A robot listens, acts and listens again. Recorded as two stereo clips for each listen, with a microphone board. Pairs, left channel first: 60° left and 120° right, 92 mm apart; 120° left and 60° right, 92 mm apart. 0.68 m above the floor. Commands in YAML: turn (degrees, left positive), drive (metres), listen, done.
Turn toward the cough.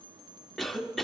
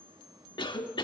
turn: 150
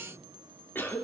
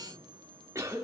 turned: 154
done: "Facing the cough, 1 to 2 m away."